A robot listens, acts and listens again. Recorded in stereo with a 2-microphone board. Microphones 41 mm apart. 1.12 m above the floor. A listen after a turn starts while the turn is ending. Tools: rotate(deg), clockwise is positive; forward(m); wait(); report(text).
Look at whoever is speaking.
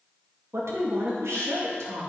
rotate(75)
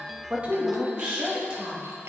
rotate(25)
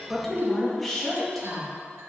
report("Found it: a woman speaking, straight ahead.")